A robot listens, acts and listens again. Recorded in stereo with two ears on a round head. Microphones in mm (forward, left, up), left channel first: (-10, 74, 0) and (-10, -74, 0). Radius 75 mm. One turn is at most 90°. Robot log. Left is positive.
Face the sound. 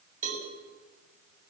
note: The cowbell: about 50° right or 130° right.
cmd yaw -50
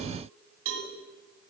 note: So it is at 80° right.
cmd yaw -80
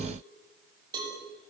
note: The cowbell is now 25° right.
cmd yaw -25
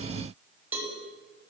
note: The cowbell is now 10° right.
cmd yaw -10
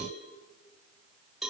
end: Found it: a cowbell, straight ahead, over 4 m away.